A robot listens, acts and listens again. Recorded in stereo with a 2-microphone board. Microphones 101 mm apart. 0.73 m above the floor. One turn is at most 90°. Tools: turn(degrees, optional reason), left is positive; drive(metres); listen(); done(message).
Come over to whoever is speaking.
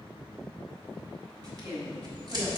turn(degrees=-35, reason="The woman speaking: about 35° right or 145° right.")
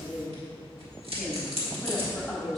drive(metres=1.0)
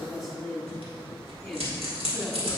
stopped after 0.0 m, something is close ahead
done("Something is in my way. I am facing the woman speaking but have not reached it.")